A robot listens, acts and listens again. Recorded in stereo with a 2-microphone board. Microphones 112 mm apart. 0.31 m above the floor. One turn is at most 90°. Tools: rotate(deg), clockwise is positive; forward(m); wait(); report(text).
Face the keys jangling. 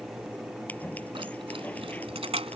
rotate(65)
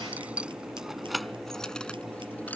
report("Found it: keys jangling, straight ahead.")